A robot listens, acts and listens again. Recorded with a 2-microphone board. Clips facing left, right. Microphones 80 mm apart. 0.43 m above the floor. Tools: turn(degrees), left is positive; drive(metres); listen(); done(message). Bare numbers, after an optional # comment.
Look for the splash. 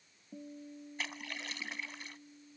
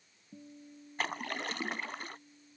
# The splash: about 50° right or 130° right.
turn(-50)
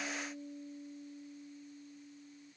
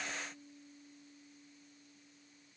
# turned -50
listen()
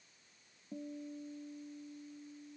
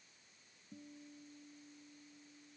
done("I heard a splash, but can't make it out now. It was about straight ahead or 80° right.")